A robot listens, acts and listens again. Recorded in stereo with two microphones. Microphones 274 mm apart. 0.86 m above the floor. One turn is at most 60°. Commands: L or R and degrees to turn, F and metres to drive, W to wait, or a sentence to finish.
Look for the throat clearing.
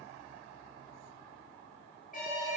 W
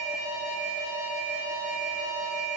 W
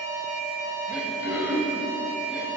R30
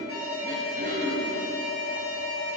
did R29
R60
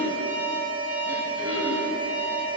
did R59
R60
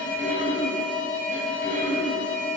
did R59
R30
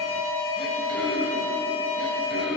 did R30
Found it: throat clearing, straight ahead, 2 to 4 m away.